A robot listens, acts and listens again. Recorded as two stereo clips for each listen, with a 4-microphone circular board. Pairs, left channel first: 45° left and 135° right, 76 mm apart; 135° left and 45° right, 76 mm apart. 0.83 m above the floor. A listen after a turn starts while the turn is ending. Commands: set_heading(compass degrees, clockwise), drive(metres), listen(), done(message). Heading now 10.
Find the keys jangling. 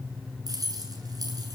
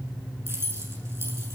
set_heading(110)
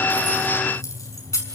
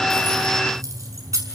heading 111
done("Facing the keys jangling, over 4 m away.")